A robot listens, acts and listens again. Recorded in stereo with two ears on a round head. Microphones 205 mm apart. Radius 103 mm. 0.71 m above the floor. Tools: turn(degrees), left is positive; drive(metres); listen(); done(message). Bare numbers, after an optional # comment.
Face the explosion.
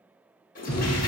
# The explosion: about 70° left or 110° left.
turn(70)
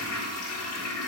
listen()
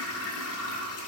done("I heard an explosion, but can't make it out now. It was about straight ahead or 40° left.")